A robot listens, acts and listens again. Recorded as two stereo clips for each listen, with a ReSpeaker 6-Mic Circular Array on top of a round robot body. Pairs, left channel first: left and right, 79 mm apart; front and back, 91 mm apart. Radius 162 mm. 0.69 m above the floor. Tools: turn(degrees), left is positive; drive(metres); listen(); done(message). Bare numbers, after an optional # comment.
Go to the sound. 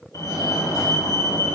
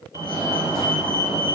# The fire alarm: 130° left.
turn(130)
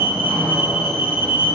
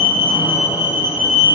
# The fire alarm is now 20° right.
turn(-20)
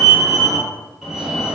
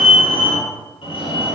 drive(1.0)
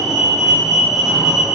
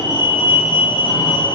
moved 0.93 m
drive(1.0)
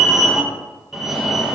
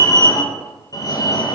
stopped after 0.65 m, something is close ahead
done("I am next to the fire alarm.")